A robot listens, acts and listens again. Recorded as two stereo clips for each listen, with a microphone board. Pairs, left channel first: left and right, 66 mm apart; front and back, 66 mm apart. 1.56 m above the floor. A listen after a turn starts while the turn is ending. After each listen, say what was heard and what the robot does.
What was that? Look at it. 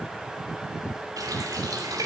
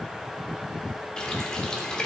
The running tap: 75° right. Turn 75° right.
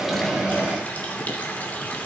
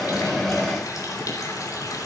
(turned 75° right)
The running tap is now 25° left. Turn 25° left.
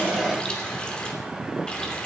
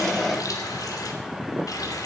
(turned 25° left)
The running tap is now 15° left. Turn 15° left.
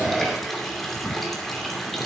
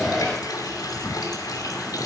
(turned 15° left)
Found it: a running tap, straight ahead, 2 to 4 m away.